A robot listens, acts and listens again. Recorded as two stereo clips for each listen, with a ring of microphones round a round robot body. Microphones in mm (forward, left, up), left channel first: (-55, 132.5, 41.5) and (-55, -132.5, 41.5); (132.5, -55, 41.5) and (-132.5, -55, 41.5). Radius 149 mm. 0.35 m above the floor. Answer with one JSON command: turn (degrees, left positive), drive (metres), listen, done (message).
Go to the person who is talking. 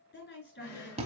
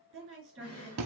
{"turn": 135}
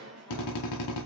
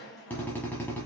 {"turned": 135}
{"listen": true}
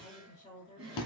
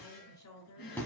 {"turn": 15}
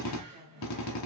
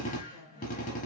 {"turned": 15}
{"listen": true}
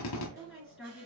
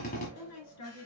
{"drive": 1.0}
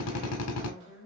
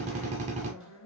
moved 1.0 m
{"turn": -10}
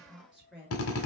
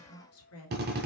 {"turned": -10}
{"drive": 1.0}
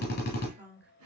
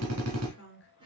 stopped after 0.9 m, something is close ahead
{"done": "Arrived at the woman speaking, straight ahead."}